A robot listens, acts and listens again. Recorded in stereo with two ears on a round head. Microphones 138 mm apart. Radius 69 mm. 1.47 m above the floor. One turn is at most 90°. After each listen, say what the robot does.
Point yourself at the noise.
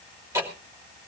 Turn 20° right.
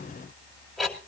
Found it: ticking, straight ahead.